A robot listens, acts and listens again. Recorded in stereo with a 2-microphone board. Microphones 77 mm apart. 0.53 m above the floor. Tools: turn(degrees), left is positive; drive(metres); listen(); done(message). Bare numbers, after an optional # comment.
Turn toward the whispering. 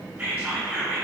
# The whispering: about 25° right or 155° right.
turn(-25)
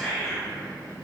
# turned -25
done("Found it: whispering, straight ahead.")